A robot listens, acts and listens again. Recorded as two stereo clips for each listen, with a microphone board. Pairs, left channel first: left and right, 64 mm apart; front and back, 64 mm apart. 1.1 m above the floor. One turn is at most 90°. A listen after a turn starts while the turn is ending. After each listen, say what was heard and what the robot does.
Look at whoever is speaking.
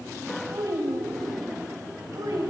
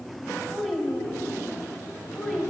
The child speaking: 75° right. Turn 75° right.
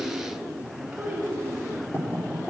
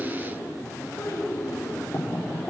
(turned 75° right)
The child speaking is now 15° right. Turn 15° right.
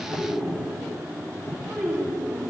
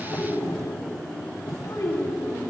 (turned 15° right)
The child speaking is now 10° left. Turn 10° left.
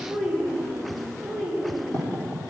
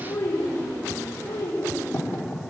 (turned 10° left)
Facing the child speaking.